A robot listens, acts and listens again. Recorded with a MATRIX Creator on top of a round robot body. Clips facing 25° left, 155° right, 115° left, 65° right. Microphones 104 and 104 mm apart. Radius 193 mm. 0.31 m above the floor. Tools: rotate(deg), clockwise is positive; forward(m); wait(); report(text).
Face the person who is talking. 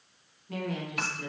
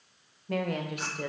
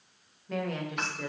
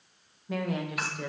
rotate(150)
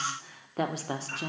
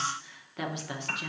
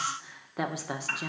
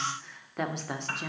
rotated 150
rotate(-30)
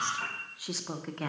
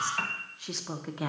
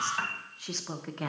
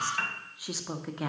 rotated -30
rotate(140)
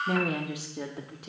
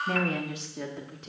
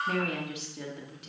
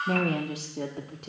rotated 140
rotate(50)
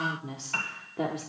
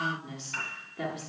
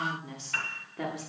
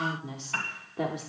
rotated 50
report("Found it: a woman speaking, straight ahead, 1 to 2 m away.")